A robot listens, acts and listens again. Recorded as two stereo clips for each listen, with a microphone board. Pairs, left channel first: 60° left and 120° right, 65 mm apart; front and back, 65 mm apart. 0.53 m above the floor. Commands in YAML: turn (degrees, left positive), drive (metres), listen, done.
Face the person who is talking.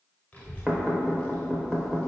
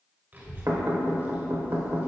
turn: 125
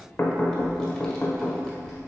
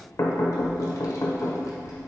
turn: -20
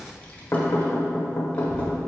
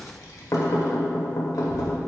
turn: -10
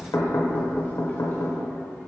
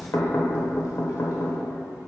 done: "Found it: a child speaking, straight ahead, 1 to 2 m away."